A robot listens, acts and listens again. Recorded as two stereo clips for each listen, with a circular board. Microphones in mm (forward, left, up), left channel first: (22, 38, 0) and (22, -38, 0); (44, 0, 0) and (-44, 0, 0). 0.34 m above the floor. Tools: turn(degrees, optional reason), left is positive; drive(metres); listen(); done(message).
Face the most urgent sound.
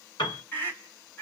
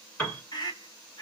turn(degrees=30, reason="The scream: 30° left.")
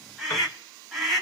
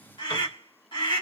done("Found it: a scream, straight ahead.")